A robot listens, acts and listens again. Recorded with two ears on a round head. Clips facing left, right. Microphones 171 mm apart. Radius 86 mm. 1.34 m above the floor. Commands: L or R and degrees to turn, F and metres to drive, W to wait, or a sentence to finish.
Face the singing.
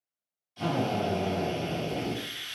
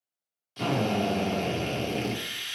W
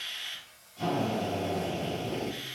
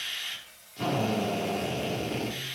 R35
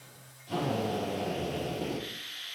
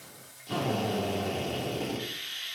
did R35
R100
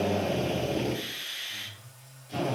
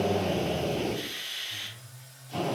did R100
R15
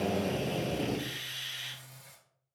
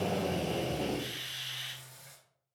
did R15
Found it: singing, straight ahead.